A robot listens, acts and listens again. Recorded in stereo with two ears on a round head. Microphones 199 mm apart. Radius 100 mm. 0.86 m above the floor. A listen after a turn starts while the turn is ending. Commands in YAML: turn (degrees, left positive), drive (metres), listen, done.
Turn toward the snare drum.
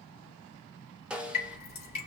turn: -30
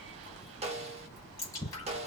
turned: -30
turn: -145
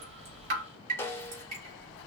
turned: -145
turn: 10
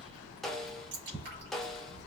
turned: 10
done: "Found it: a snare drum, straight ahead."